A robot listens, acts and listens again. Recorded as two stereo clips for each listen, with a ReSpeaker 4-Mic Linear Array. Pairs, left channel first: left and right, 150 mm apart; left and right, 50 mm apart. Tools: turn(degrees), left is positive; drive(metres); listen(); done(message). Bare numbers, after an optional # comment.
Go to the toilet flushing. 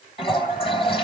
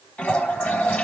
# The toilet flushing: about 40° left or 140° left.
turn(40)
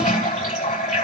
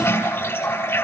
# So it is at 100° left.
turn(100)
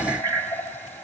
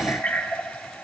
# The toilet flushing is now 15° left.
turn(15)
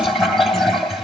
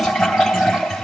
drive(1.0)
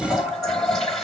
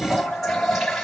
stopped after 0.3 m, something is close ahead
done("Something is in my way. I am facing the toilet flushing but have not reached it.")